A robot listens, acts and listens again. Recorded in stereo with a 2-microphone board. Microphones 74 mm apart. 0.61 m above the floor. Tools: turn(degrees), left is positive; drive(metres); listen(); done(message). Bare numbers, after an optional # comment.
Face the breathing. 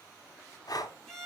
# The breathing: about 60° left or 120° left.
turn(60)
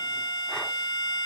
listen()
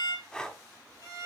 # So it is at 15° left.
turn(15)
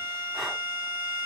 listen()
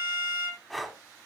done("Found it: breathing, straight ahead, under 1 m away.")